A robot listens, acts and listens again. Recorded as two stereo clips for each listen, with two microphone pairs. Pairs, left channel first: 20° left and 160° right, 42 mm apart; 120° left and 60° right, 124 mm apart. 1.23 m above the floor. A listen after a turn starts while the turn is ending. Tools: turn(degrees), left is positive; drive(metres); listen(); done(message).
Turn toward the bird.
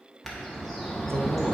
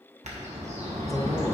turn(degrees=-65)
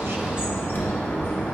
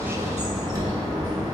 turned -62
done("Facing the bird.")